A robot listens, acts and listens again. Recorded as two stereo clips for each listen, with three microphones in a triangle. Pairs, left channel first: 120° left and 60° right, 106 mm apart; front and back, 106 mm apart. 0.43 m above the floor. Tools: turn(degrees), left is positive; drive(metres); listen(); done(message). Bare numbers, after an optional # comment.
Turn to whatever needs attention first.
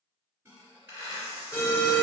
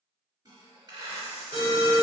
# The alarm: straight behind.
turn(180)
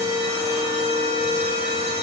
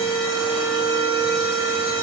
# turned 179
done("Found it: an alarm, straight ahead, 1 to 2 m away.")